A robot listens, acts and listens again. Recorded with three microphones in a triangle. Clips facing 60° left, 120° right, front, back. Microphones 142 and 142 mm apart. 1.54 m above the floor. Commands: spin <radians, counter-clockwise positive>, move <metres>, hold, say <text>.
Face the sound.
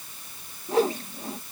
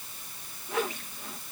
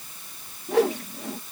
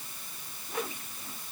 say Facing the whoosh.